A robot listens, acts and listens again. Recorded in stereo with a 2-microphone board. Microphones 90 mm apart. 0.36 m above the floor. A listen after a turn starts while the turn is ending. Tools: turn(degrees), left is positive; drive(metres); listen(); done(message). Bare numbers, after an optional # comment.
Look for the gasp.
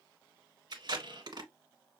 listen()
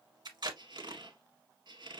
listen()
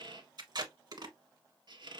done("I can't make out a gasp to turn to.")